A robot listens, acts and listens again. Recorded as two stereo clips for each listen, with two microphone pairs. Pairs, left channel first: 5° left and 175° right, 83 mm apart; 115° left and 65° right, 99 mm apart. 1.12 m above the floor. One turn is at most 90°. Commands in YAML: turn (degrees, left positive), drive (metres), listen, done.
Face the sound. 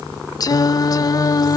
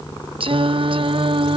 turn: -35
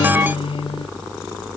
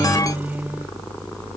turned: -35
turn: 10
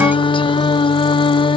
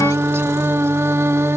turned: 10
done: "Found it: singing, straight ahead."